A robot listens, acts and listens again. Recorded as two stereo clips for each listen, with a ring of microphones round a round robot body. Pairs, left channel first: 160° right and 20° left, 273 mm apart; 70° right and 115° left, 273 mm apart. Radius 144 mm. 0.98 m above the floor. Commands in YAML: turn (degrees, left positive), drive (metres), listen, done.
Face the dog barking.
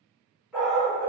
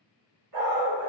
turn: 110
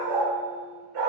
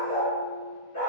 done: "Facing the dog barking, 2 to 4 m away."